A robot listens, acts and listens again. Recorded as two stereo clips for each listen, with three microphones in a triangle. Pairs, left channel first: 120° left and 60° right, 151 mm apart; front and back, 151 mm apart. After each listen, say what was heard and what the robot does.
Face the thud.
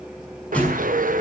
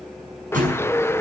The thud: 160° right. Turn 160° right.
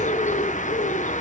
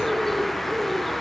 I heard a thud from this way, but can't make it out now.